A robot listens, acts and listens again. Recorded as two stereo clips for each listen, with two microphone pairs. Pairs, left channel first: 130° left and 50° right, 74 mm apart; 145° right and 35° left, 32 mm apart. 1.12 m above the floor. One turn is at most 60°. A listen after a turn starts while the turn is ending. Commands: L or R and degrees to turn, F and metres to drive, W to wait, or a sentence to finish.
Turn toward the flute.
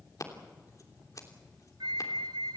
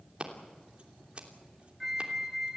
R35
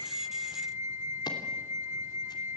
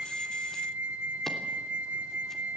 Found it: a flute, straight ahead.